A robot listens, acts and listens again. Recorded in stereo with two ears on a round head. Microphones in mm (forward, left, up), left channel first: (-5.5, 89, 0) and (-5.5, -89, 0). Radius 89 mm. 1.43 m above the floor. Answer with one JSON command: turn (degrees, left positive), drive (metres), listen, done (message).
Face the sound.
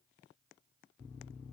{"listen": true}
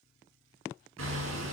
{"turn": -75}
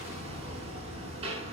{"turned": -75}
{"turn": -30}
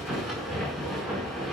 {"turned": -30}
{"done": "Found it: hammering, straight ahead."}